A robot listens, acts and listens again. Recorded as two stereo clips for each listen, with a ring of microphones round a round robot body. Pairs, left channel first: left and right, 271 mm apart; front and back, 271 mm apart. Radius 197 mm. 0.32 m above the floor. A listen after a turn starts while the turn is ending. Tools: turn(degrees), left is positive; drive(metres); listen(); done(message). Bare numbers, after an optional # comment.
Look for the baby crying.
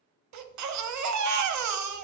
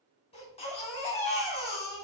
# The baby crying: 75° right.
turn(-75)
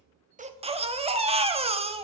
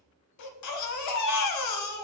# The baby crying is now 20° right.
turn(-20)
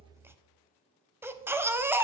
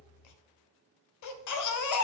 done("Found it: a baby crying, straight ahead, under 1 m away.")